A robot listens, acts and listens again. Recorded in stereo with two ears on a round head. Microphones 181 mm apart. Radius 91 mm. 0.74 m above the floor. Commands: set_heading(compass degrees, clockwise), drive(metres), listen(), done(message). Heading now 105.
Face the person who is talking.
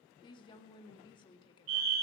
set_heading(80)
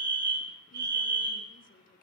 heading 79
listen()
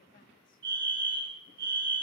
listen()
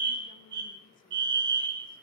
done("I heard a woman speaking, but can't make it out now. It was about straight ahead or 130° left.")